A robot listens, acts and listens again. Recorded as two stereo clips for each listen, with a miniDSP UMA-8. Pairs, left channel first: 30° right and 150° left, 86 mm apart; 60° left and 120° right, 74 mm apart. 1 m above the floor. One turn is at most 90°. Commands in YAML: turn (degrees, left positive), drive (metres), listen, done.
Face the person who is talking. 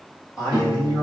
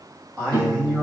turn: -80
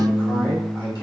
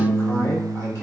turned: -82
listen: true
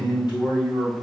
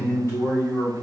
done: "Facing the man speaking, 1 to 2 m away."